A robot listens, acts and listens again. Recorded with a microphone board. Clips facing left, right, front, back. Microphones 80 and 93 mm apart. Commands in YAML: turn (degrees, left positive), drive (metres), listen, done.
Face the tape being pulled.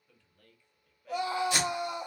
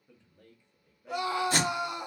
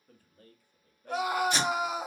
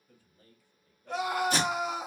turn: -135
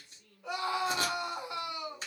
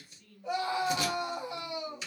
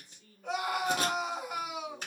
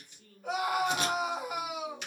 listen: true
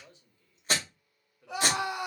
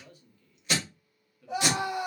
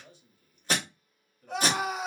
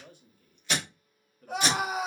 turn: 45
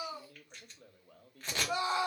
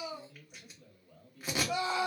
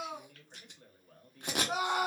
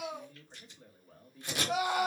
turn: -10
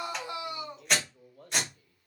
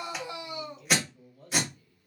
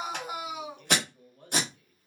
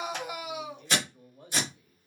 done: "Found it: tape being pulled, straight ahead."